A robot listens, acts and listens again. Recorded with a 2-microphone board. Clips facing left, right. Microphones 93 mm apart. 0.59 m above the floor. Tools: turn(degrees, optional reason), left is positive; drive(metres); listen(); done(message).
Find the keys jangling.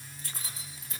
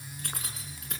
turn(degrees=-70, reason="The keys jangling: about 70° right or 110° right.")
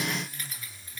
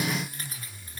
turn(degrees=-40, reason="So it is at 40° right.")
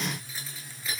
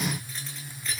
done("Facing the keys jangling.")